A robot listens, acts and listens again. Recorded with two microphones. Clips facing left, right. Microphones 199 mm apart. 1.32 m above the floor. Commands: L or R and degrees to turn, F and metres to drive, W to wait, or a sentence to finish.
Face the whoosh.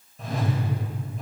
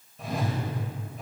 L30
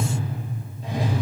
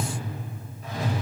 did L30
L150
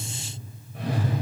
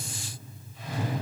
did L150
L65
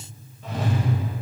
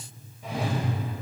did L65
R10
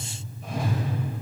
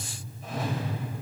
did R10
Found it: a whoosh, straight ahead.